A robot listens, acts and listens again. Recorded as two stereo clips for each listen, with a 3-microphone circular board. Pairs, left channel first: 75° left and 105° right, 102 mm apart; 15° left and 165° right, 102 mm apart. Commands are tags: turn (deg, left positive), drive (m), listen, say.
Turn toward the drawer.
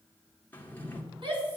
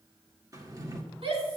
<turn deg="145"/>
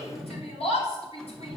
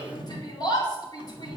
<turn deg="-10"/>
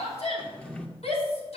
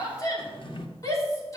<say>Found it: a drawer, straight ahead, 1 to 2 m away.</say>